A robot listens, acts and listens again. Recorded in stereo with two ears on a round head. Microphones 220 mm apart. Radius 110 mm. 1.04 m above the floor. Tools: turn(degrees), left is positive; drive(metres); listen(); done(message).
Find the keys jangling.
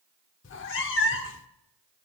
listen()
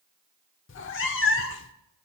listen()
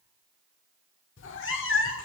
done("I can't make out keys jangling to turn to.")